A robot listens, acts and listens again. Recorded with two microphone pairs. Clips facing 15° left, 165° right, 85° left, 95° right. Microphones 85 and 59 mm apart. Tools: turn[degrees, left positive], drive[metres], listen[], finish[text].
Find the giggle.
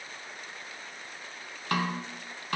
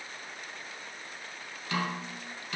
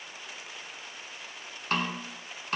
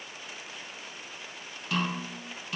Action: listen[]
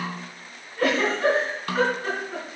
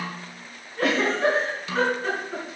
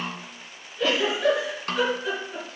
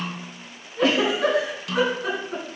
Thought: The giggle: 75° right.
Action: turn[-75]
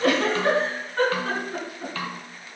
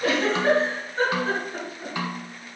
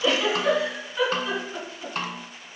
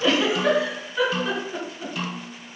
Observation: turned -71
Action: finish[Facing the giggle, over 4 m away.]